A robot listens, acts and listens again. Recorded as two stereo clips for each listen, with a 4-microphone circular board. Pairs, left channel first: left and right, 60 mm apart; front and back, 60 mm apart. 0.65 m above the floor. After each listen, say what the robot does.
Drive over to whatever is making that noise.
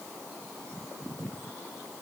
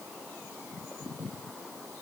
Keep listening.
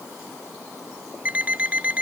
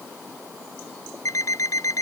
Turn 25° right.
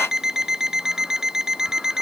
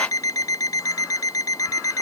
Turn 10° right.
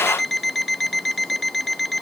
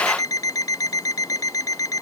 Drive 1.0 m forward.
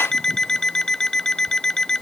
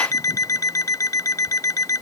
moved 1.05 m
Turn 10° left.
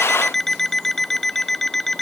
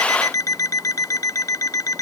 Drive 1.0 m forward.
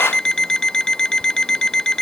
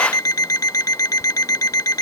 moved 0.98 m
Turn 10° left.
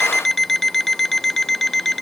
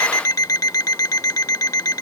Drive 1.0 m forward.
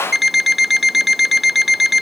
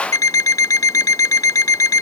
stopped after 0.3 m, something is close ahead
Arrived at the alarm clock, straight ahead.